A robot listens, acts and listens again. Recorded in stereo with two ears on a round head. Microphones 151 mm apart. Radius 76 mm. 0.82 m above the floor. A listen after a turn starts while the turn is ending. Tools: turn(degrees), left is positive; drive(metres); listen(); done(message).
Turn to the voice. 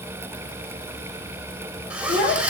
turn(degrees=55)
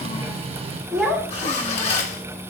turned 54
done("Facing the child speaking, over 4 m away.")